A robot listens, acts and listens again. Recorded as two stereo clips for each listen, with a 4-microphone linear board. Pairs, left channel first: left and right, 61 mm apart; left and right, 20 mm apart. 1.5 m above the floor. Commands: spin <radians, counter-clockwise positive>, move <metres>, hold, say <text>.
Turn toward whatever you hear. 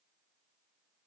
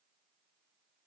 hold
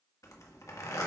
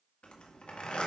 spin 1.13
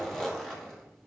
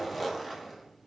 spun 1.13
say Found it: a zipper, straight ahead.